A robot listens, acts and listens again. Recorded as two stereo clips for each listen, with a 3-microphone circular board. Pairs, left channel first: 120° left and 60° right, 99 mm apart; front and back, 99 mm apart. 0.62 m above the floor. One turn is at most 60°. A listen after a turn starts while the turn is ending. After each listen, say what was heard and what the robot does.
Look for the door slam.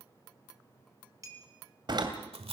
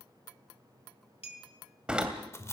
The door slam: 100° right. Turn 60° right.
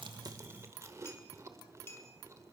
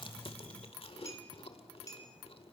Nothing new. It was at 40° right. Turn 40° right.
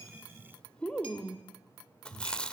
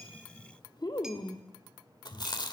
Facing where the door slam came from. I can't hear it now.